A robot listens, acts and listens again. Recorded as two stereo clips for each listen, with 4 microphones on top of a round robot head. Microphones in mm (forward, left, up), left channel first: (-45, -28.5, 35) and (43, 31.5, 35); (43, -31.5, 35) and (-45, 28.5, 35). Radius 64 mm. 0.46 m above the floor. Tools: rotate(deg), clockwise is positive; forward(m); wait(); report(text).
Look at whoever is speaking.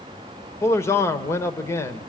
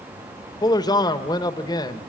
rotate(85)
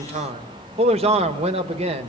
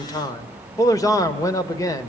rotate(-20)
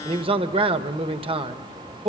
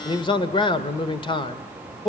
report("Facing the man speaking.")